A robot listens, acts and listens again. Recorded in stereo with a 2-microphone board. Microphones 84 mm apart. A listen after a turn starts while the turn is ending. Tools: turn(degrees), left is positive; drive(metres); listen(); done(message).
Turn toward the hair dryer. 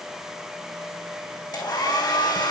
turn(degrees=60)
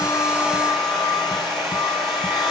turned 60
done("Facing the hair dryer.")